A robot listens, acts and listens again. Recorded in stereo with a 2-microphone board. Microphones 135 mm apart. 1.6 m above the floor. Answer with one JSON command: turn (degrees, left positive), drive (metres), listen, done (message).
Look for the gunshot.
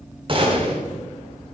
{"turn": -35}
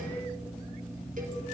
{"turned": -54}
{"listen": true}
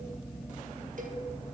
{"done": "I heard a gunshot, but can't make it out now. It was about 20° left or 90° right."}